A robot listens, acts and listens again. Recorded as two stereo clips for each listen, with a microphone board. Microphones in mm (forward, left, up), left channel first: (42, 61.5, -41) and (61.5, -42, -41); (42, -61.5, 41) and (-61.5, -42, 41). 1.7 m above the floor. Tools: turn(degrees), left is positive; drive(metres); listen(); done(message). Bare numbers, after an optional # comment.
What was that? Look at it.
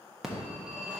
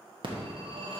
# The phone ringing: 165° right.
turn(-165)
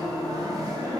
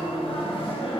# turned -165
# The phone ringing is now 25° right.
turn(-25)
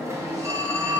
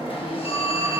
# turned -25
# The phone ringing is now 20° right.
turn(-20)
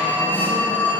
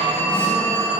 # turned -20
done("Found it: a phone ringing, straight ahead, 1 to 2 m away.")